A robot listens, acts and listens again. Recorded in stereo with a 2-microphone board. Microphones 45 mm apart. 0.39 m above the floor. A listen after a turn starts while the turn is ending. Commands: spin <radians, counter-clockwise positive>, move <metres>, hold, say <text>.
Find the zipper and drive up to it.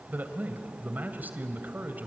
hold
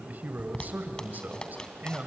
spin 0.26
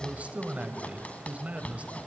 spin 2.62
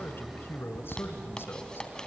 spin 0.35
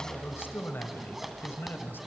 move 1.0
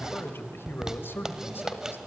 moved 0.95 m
spin -0.17
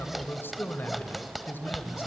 move 1.0
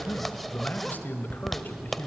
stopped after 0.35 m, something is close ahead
say I am next to the zipper.